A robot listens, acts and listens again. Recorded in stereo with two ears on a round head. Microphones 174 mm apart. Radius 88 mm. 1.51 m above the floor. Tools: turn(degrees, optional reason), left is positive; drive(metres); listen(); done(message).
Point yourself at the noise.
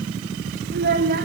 turn(degrees=-50, reason="The child speaking: about 50° right or 130° right.")
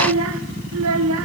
turn(degrees=-80, reason="So it is at 80° right.")
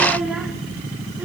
listen()
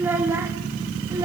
turn(degrees=-20, reason="The child speaking is now 20° right.")
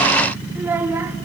turn(degrees=-10, reason="The child speaking is now 10° right.")
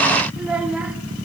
done("Found it: a child speaking, straight ahead, 2 to 4 m away.")